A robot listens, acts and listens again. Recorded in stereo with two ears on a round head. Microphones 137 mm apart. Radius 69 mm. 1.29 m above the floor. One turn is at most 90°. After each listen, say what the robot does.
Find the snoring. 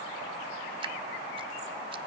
Keep listening.
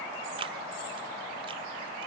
Keep listening.
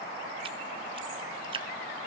I can't make out snoring to turn to.